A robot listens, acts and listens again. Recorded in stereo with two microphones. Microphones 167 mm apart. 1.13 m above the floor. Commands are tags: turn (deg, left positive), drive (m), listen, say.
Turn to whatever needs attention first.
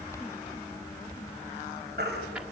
<turn deg="-90"/>
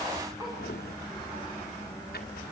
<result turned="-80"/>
<turn deg="-10"/>
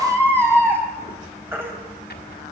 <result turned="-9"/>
<turn deg="-15"/>
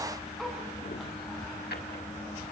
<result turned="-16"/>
<listen/>
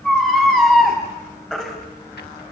<say>Found it: a baby crying, straight ahead, over 4 m away.</say>